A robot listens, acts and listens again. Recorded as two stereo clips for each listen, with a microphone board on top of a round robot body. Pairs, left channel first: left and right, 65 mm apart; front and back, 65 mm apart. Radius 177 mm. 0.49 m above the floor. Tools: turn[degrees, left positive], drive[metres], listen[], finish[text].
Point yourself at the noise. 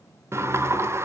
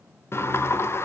Thought: The sliding door: 45° right.
Action: turn[-45]
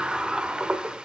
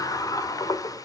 Thought: The sliding door is now 15° right.
Action: turn[-15]
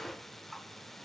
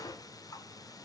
Action: finish[Facing the sliding door.]